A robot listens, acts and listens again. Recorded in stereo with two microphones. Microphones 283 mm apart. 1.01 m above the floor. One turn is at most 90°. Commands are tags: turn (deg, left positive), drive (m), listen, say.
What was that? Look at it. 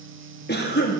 <turn deg="35"/>
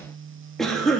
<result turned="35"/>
<say>Found it: a cough, straight ahead, 1 to 2 m away.</say>